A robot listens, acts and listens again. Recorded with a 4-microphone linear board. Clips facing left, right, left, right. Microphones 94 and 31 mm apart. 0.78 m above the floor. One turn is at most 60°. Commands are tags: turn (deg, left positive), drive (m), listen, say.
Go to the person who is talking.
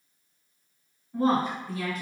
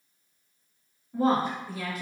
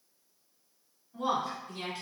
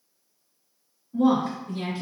<turn deg="-30"/>
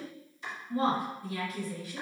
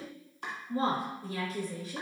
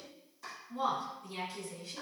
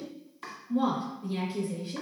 <turn deg="-60"/>
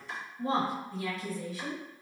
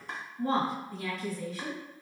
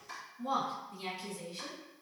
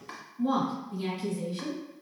<turn deg="-60"/>
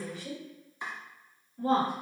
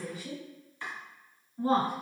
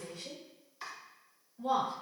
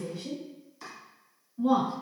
<turn deg="-20"/>
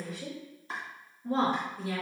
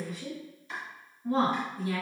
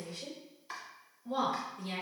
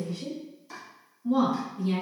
<drive m="1.0"/>
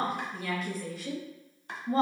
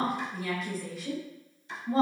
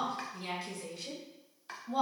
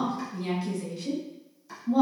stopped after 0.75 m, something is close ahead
<say>I am next to the woman speaking.</say>